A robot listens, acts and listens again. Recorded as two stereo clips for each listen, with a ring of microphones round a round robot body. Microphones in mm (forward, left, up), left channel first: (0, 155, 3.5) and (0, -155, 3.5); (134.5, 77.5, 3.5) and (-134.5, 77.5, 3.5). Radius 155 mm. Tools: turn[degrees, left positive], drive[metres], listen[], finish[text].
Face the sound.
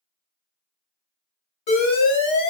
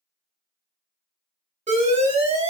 Thought: The alarm: 115° left.
Action: turn[115]
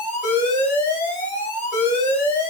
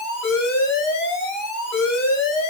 Thought: The alarm is now 25° left.
Action: turn[25]
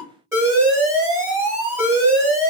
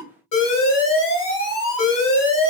Thought: The alarm is now 10° right.
Action: turn[-10]
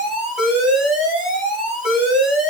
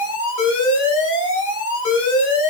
Action: finish[Facing the alarm.]